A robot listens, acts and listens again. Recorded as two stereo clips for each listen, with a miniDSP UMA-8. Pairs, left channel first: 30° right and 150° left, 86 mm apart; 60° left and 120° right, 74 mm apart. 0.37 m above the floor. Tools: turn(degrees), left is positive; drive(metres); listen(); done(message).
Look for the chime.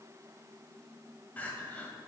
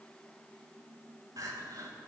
listen()
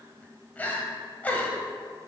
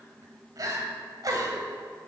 listen()
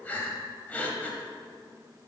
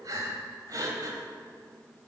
done("I can't make out a chime, only crying.")